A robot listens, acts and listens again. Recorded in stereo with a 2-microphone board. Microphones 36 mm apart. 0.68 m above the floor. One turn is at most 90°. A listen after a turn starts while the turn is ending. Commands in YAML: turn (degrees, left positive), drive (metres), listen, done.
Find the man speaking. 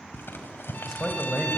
turn: 30
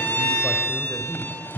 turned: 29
turn: 90
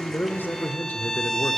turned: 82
turn: 65
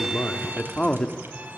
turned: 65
turn: 25
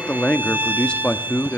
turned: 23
turn: 30
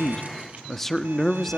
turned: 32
done: "Found it: a man speaking, straight ahead, 1 to 2 m away."